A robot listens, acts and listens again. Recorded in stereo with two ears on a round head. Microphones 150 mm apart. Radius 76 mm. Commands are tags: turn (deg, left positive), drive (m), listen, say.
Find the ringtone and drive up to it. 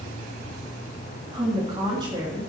<listen/>
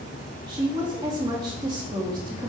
<listen/>
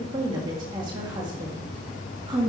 <say>I can't make out a ringtone, only a woman speaking.</say>